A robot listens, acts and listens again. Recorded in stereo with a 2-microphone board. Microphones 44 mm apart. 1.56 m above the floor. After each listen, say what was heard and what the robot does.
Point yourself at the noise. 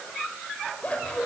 The scissors: about 25° left or 155° left. Turn 25° left.
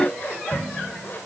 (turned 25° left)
So it is at 130° left. Turn 130° left.
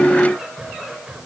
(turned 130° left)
The scissors is now 10° right. Turn 10° right.
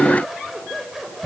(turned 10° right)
Facing the scissors.